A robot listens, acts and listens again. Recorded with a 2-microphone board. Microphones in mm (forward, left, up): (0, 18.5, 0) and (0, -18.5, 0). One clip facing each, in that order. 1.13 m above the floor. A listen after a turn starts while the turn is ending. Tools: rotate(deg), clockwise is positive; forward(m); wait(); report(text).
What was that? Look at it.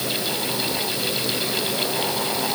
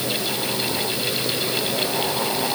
wait()
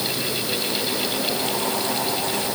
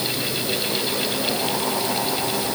wait()
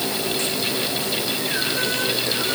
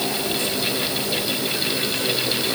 report("I can't make out anything to turn to.")